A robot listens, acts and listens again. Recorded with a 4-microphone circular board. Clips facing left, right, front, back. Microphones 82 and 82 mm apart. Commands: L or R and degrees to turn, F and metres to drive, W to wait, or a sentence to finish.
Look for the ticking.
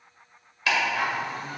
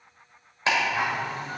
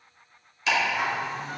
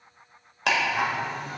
R155
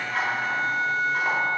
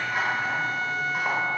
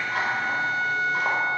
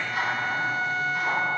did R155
R10
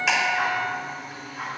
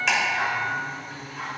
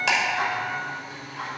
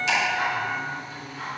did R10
Facing the ticking, 1 to 2 m away.